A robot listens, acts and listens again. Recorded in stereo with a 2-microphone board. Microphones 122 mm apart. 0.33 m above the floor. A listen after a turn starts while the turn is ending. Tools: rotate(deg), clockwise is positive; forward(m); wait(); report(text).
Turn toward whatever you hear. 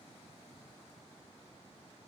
wait()
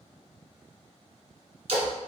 rotate(60)
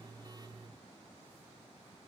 wait()
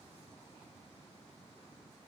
report("I heard a splash, but can't make it out now. It was about straight ahead or 60° right.")